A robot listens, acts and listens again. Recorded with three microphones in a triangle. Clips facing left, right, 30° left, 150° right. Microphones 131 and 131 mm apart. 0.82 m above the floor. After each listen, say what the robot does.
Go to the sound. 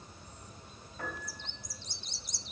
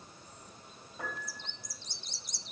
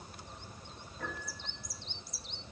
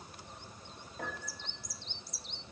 Turn 165° right.
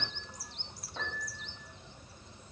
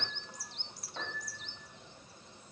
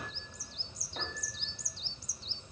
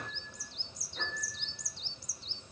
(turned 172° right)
Drive 1.0 m forward.
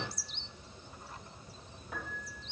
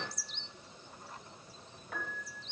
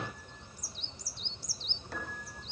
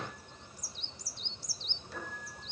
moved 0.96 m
Turn 10° left.
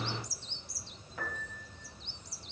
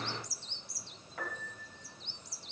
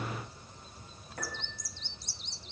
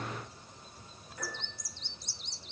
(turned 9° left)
Drive 1.0 m forward.
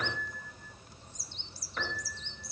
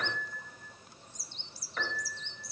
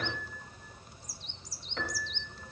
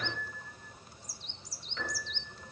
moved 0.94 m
Drive 1.0 m forward.
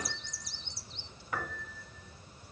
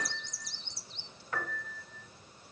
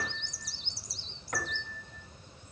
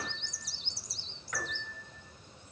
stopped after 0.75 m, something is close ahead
Turn 10° left.
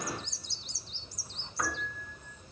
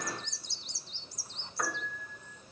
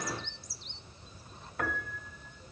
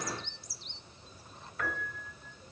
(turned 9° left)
I am next to the piano.